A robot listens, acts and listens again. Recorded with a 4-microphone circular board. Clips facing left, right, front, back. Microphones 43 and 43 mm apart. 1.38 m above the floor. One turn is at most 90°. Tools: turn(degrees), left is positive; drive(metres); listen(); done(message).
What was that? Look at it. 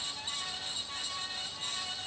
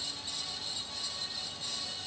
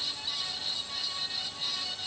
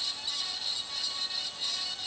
listen()
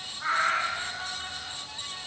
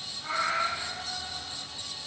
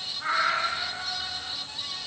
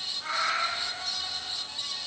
turn(degrees=60)
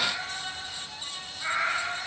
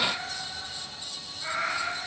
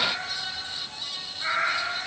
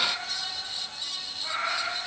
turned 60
turn(degrees=25)
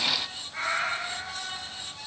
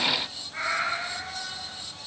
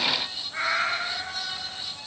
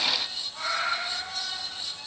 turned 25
done("Facing the cat meowing.")